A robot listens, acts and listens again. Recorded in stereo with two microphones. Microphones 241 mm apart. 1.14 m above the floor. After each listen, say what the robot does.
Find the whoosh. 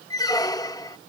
Keep listening.
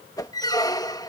Turn 30° left.
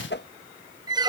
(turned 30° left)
Turn 135° left.
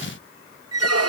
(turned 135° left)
Keep listening.
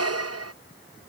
Keep listening.
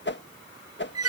Turn 50° left.
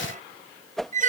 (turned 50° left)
Facing the whoosh.